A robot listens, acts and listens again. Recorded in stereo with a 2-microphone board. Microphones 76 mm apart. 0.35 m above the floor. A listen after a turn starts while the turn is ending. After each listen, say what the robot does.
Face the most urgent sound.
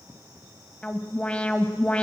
Turn 15° left.
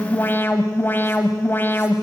Turn 150° left.
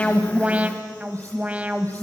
Turn 20° right.
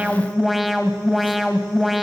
Facing the alarm, 1 to 2 m away.